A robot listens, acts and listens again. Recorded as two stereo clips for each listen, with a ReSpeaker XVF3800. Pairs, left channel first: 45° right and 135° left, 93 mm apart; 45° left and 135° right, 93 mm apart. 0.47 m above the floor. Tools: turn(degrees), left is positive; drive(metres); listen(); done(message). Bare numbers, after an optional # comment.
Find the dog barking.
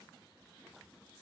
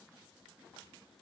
listen()
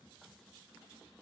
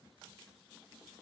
listen()
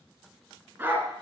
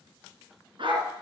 # The dog barking: 160° right.
turn(-160)
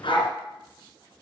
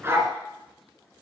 # The dog barking is now 70° right.
turn(-70)
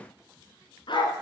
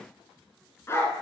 # The dog barking is now 15° right.
turn(-15)
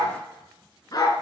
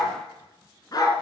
done("Found it: a dog barking, straight ahead.")